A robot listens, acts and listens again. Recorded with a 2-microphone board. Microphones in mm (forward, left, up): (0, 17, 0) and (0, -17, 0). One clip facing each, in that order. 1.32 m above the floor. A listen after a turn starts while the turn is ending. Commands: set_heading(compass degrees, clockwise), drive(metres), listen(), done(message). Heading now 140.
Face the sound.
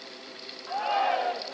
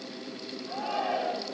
set_heading(75)
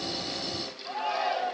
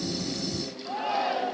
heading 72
done("Found it: a shout, straight ahead.")